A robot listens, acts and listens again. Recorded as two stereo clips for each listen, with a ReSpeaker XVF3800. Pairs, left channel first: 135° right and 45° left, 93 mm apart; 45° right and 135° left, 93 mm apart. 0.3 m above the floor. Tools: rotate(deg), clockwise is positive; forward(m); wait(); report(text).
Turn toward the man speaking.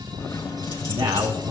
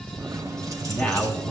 rotate(-30)
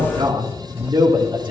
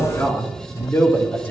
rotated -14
rotate(-20)
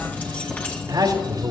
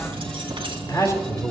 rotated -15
report("Found it: a man speaking, straight ahead, over 4 m away.")